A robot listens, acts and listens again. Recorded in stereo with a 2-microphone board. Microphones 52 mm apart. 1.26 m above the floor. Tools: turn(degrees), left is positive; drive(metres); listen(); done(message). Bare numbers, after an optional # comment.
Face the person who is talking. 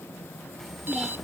turn(30)
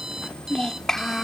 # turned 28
turn(30)
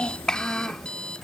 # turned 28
turn(30)
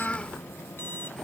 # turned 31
# So it is at 160° left.
turn(160)
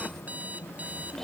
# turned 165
done("Facing the child speaking.")